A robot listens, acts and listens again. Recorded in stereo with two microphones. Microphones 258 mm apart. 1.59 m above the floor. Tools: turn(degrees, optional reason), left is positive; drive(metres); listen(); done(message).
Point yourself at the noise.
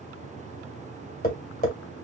turn(degrees=35, reason="The tapping: about 35° left or 145° left.")
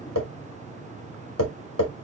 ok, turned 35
turn(degrees=110, reason="So it is at 110° left.")
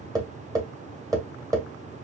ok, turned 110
turn(degrees=-10, reason="The tapping is now 10° right.")
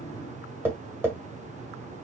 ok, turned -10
turn(degrees=-10, reason="The tapping is now 10° right.")
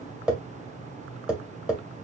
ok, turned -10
done("Facing the tapping, 1 to 2 m away.")